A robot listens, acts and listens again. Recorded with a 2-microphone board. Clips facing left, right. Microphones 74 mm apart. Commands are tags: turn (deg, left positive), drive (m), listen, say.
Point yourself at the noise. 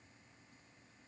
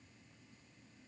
<listen/>
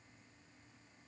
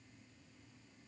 <listen/>
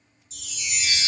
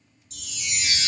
<turn deg="-65"/>
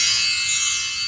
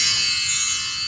<turn deg="-30"/>
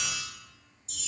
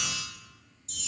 <say>Found it: a chime, straight ahead.</say>